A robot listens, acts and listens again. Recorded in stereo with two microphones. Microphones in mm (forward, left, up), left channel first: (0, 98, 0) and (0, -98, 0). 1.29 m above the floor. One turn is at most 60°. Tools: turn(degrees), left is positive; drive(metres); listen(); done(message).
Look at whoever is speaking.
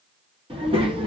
turn(degrees=-25)
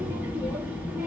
turn(degrees=-10)
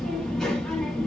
done("Facing the child speaking, 1 to 2 m away.")